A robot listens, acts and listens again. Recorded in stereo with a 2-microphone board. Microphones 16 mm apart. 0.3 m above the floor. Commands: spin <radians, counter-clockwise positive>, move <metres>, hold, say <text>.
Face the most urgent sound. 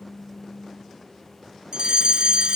spin -1.22
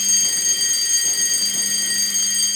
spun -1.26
say Facing the fire alarm.